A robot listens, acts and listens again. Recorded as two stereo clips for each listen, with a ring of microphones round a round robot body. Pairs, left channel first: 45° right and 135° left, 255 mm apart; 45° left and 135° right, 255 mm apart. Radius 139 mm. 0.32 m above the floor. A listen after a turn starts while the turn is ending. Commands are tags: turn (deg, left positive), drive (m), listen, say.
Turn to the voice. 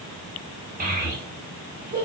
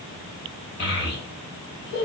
<turn deg="85"/>
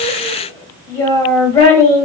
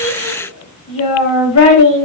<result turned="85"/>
<turn deg="35"/>
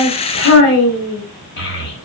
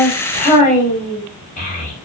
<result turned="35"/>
<turn deg="-10"/>
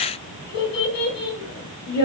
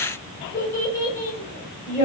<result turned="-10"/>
<say>Facing the child speaking, 1 to 2 m away.</say>